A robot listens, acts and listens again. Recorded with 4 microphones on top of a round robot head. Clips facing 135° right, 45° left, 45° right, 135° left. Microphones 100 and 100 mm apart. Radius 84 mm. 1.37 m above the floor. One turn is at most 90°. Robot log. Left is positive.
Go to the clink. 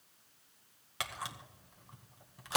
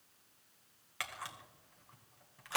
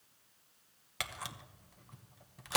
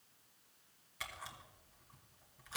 cmd idle
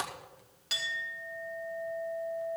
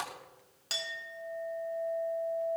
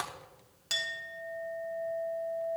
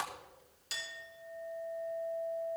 note: The clink: 10° right.
cmd yaw -10
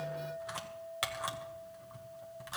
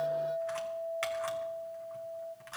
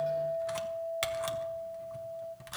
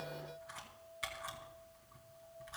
note: The clink is now 10° right.
cmd yaw -10
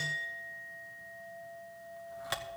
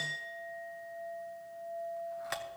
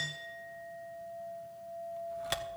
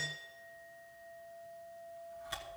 cmd fwd 1.0
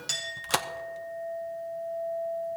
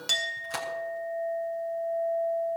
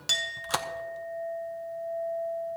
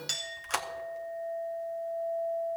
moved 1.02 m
cmd fwd 1.0
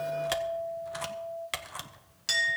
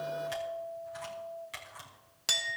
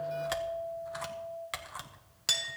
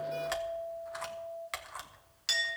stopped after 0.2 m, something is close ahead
end: I am next to the clink.